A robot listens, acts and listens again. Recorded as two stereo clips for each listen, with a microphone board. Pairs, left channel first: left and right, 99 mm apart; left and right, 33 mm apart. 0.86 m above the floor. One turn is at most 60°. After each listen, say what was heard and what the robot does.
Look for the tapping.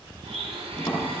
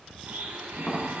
The tapping: about 40° left or 140° left. Turn 40° left.
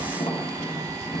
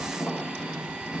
So it is at 100° left. Turn 60° left.
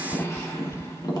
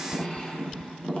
The tapping is now 40° left. Turn 40° left.
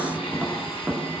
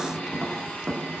Facing the tapping, 1 to 2 m away.